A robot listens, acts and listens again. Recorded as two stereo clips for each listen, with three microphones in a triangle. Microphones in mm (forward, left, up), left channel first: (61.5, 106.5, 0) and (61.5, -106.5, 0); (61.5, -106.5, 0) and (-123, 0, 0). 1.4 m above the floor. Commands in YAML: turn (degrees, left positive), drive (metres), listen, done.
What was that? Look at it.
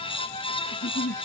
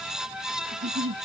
turn: 140
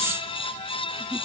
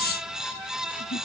turn: -15
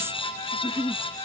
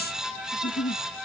done: "Facing the giggle."